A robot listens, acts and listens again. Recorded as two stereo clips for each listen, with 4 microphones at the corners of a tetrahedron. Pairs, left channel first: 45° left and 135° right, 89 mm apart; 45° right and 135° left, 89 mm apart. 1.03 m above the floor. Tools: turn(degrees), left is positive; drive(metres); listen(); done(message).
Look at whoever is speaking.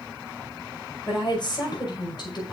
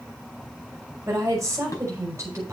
turn(degrees=80)
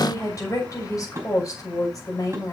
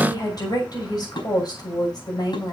done("Facing the woman speaking.")